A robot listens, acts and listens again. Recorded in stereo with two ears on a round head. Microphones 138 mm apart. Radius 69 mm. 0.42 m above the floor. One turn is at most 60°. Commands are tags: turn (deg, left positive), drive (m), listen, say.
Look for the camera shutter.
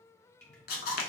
<turn deg="60"/>
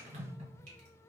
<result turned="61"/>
<listen/>
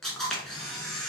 <say>Found it: a camera shutter, straight ahead, under 1 m away.</say>